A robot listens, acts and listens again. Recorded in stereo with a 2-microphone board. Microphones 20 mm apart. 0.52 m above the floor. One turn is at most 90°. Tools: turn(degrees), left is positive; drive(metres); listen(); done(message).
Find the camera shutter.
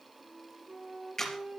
turn(degrees=20)
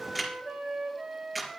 done("Found it: a camera shutter, straight ahead, 2 to 4 m away.")